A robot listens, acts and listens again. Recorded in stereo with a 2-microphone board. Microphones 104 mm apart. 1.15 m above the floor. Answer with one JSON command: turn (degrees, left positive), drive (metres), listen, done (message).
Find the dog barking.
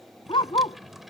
{"turn": 55}
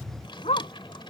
{"turn": 80}
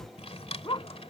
{"turn": 50}
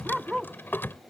{"done": "Facing the dog barking."}